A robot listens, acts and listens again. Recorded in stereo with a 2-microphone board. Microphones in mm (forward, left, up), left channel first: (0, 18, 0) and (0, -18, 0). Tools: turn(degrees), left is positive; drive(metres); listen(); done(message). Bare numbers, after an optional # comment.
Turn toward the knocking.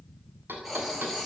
turn(-90)
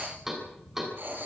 # So it is at 10° right.
turn(-10)
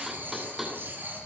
done("Facing the knocking, over 4 m away.")